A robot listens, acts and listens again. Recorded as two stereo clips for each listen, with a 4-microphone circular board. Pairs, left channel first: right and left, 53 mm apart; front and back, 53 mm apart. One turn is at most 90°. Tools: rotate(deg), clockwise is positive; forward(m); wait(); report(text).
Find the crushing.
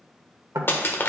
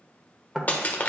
rotate(55)
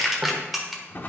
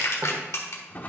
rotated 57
report("Found it: crushing, straight ahead.")